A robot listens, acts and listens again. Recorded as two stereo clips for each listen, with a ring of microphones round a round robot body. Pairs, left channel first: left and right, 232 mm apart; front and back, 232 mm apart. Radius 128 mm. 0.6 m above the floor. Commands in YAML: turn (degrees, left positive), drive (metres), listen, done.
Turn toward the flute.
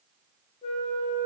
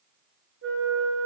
turn: 160
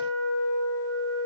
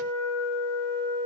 turn: 15
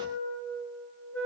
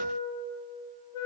done: "Found it: a flute, straight ahead, over 4 m away."